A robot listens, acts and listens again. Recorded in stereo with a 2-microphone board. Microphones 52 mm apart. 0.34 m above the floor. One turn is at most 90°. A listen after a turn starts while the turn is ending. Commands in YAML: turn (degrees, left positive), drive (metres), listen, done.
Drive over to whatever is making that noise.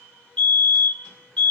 turn: 20
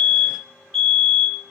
drive: 1.0
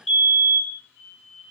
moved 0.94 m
drive: 1.0
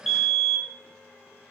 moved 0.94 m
drive: 1.0
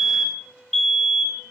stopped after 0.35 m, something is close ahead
done: "Arrived at the fire alarm, straight ahead."